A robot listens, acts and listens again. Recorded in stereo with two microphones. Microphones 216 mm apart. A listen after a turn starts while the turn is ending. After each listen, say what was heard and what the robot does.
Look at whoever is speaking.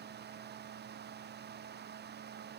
Keep listening.
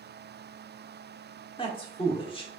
The man speaking: about 25° left or 155° left. Turn 25° left.
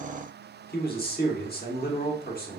So it is at 125° left. Turn 125° left.
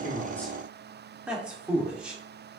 Found it: a man speaking, straight ahead.